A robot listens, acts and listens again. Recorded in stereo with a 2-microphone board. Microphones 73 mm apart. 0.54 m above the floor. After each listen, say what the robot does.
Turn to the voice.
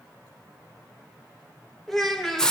Turn 30° left.
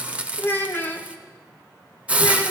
Turn 145° left.
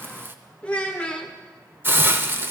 Turn 15° left.
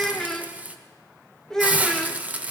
Facing the child speaking.